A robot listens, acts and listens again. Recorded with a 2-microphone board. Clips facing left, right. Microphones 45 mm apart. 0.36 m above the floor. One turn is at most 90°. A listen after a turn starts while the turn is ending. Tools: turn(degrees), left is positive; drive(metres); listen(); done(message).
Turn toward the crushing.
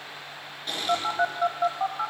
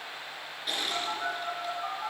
turn(degrees=-30)
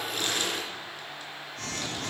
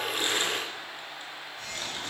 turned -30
listen()
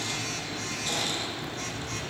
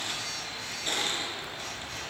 listen()
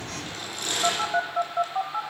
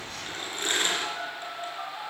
turn(degrees=-90)
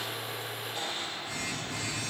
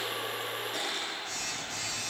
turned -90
turn(degrees=-90)
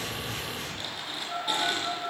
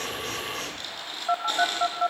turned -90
listen()
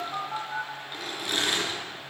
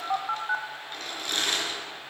turn(degrees=10)
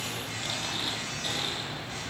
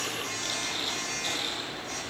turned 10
listen()
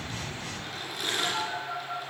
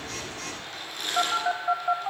done("Facing the crushing.")